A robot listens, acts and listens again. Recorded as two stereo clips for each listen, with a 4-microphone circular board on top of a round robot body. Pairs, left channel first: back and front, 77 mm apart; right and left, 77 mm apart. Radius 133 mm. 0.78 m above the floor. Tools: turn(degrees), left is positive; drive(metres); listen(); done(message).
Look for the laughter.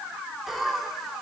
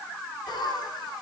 turn(degrees=-90)
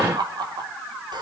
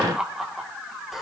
done("Found it: laughter, straight ahead, 2 to 4 m away.")